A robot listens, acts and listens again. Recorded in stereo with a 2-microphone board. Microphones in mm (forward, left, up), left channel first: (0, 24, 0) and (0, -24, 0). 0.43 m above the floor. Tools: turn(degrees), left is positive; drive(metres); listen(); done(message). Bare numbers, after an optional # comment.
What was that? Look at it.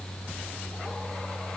listen()
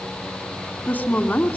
# The woman speaking: about 35° left or 145° left.
turn(35)
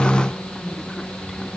listen()
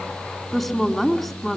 done("Facing the woman speaking, 2 to 4 m away.")